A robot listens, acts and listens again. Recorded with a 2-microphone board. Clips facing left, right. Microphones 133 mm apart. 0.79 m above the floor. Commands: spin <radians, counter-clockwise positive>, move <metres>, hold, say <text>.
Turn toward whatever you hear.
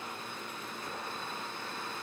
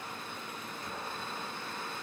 hold
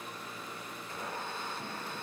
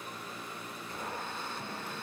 hold
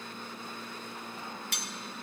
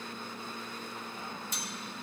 spin 1.22
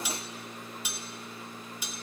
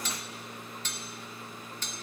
spin 0.17
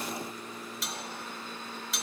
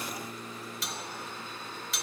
say Found it: cutlery clinking, straight ahead, under 1 m away.